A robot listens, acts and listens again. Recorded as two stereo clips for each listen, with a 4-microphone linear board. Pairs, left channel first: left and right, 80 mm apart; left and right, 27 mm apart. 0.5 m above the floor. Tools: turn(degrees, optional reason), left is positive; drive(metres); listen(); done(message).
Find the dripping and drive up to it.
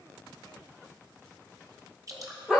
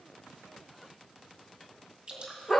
turn(degrees=-40, reason="The dripping: about 40° right or 140° right.")
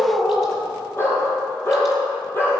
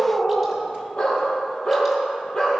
listen()
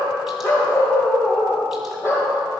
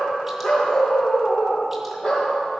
listen()
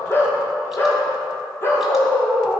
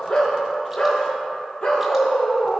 done("I heard dripping, but can't make it out now. It was about straight ahead or 100° right. I did not reach it.")